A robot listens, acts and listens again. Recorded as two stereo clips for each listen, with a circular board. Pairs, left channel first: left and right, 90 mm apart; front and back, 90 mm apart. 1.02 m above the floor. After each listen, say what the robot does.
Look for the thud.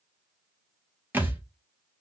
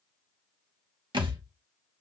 Turn 160° right.
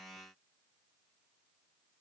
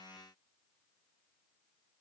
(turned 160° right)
Facing where the thud came from. I can't hear it now.